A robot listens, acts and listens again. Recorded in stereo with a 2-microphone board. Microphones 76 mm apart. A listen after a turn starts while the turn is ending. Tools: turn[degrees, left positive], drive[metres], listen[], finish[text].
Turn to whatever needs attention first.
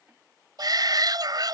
Thought: The shout: about 65° right or 115° right.
Action: turn[-65]
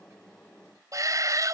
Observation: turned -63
Thought: So it is at 50° right.
Action: turn[-50]
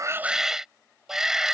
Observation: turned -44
Action: finish[Found it: a shout, straight ahead.]